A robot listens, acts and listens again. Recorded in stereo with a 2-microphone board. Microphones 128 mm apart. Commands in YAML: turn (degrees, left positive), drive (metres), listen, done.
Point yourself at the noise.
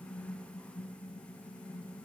listen: true
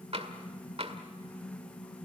turn: -50
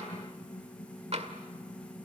turn: -70
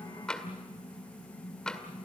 done: "Facing the tapping, 1 to 2 m away."